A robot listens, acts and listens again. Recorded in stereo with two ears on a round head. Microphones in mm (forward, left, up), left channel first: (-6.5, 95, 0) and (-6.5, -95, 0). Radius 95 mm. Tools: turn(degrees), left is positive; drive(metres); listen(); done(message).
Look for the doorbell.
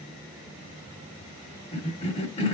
listen()
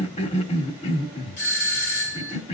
turn(degrees=45)
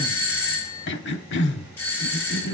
turn(degrees=10)
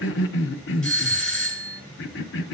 done("Found it: a doorbell, straight ahead.")